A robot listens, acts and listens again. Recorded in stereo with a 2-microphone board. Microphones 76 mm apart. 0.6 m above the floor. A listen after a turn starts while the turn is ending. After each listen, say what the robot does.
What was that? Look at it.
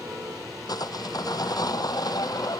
Turn 55° left.
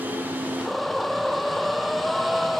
Facing the sawing.